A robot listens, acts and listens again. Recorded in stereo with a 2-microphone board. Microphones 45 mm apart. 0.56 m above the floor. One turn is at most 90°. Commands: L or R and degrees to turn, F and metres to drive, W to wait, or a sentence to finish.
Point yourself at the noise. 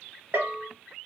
R55
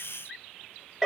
Facing the bell, 1 to 2 m away.